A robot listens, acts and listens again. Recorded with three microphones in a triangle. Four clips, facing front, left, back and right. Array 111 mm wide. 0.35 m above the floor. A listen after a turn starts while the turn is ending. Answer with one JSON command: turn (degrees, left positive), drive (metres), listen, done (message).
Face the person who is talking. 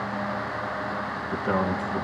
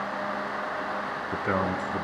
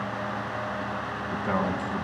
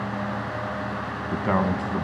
{"turn": -95}
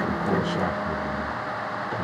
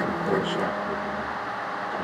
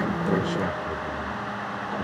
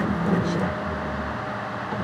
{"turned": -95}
{"listen": true}
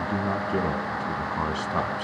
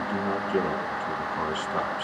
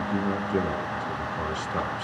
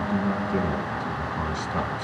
{"turn": 15}
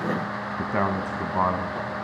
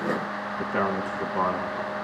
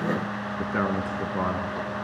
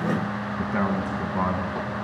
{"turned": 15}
{"done": "Facing the man speaking."}